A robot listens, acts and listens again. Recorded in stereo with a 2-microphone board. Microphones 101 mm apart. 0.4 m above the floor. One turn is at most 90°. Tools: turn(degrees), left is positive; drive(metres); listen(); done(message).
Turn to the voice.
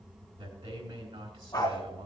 turn(degrees=-75)
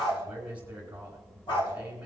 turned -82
turn(degrees=-15)
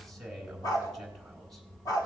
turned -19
done("Facing the man speaking, 2 to 4 m away.")